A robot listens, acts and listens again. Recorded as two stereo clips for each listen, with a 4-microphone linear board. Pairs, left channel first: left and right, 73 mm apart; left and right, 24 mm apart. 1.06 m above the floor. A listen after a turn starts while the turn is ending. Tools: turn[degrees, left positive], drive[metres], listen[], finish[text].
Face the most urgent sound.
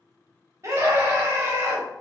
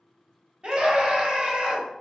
Thought: The scream: about 40° right or 140° right.
Action: turn[-40]
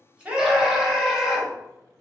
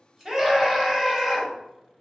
Action: finish[Found it: a scream, straight ahead.]